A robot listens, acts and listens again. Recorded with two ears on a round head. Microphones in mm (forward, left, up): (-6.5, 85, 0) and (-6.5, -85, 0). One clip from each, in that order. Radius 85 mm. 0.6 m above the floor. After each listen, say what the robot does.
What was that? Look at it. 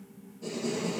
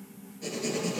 Turn 65° right.
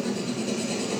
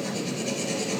Turn 45° right.
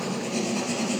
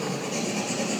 Turn 15° right.
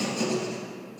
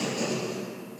Found it: writing, straight ahead.